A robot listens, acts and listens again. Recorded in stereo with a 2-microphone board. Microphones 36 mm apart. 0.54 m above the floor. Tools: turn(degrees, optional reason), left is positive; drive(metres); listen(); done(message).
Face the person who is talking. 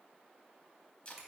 listen()
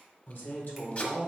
turn(degrees=55, reason="The man speaking: about 55° left or 125° left.")
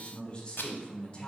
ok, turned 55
turn(degrees=35, reason="So it is at 35° left.")
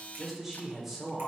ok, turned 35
done("Found it: a man speaking, straight ahead, 1 to 2 m away.")